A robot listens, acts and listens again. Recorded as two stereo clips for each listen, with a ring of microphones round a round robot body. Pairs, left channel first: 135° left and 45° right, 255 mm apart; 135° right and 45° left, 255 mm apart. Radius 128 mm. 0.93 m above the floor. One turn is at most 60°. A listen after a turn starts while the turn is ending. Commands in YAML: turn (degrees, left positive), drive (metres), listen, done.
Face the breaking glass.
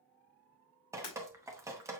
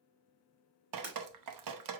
turn: 60
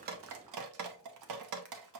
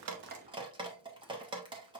turn: 35
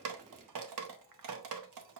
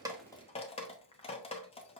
done: "Facing where the breaking glass came from. I can't hear it now."